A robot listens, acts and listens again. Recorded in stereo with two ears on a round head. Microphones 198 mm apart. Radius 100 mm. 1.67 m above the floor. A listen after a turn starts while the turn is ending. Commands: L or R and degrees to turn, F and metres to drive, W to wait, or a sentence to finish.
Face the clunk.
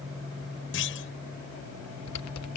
L65
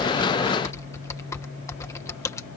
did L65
W
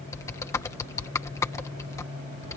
I heard a clunk, but can't make it out now. It was about straight ahead or 50° left.